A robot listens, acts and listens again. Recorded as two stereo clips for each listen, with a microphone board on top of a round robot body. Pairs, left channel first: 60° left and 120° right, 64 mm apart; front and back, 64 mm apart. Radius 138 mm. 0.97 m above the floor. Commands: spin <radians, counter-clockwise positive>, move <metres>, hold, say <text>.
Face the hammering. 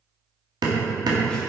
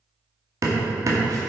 spin -2.36
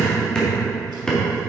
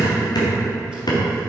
spin -0.35
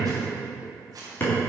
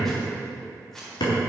say Facing the hammering.